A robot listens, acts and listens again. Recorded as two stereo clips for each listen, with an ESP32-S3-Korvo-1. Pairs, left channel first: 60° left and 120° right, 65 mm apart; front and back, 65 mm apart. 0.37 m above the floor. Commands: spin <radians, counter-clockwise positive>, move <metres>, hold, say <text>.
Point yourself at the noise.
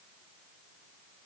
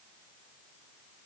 hold
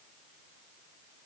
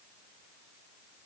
hold
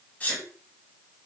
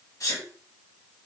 say Facing the sneeze, 2 to 4 m away.